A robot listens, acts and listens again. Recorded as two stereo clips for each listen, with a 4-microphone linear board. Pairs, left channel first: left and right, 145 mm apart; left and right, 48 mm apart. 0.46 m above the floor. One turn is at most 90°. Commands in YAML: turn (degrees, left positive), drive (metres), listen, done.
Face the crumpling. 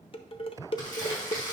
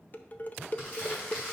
turn: 25
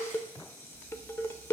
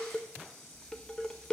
listen: true
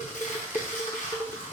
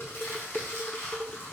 turn: 90
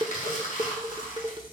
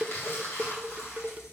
turn: 65
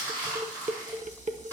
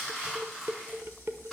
turn: 15
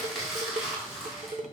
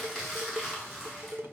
done: "Found it: crumpling, straight ahead."